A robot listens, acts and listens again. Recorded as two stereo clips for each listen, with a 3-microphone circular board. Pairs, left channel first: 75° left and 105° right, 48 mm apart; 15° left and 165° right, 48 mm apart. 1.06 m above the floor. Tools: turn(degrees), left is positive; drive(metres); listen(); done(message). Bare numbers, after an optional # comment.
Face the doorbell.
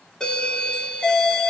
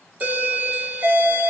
# The doorbell: 145° left.
turn(145)
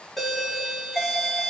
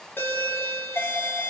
# The doorbell is now 15° right.
turn(-15)
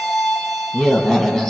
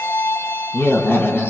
done("Found it: a doorbell, straight ahead.")